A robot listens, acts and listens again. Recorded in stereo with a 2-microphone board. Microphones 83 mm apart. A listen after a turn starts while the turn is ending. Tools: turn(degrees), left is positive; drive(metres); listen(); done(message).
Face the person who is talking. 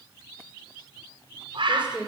turn(degrees=-30)
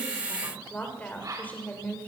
turn(degrees=15)
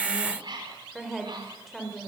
done("Found it: a woman speaking, straight ahead.")